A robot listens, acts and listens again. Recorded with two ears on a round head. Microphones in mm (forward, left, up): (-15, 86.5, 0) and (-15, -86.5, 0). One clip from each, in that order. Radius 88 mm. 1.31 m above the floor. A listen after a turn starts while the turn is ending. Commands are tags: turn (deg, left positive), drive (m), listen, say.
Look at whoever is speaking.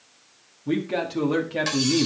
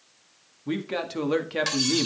<turn deg="-35"/>
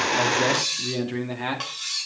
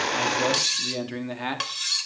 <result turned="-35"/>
<turn deg="-20"/>
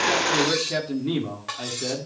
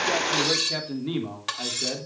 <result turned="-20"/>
<turn deg="-15"/>
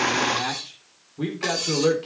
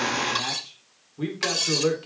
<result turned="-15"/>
<say>Facing the man speaking, 2 to 4 m away.</say>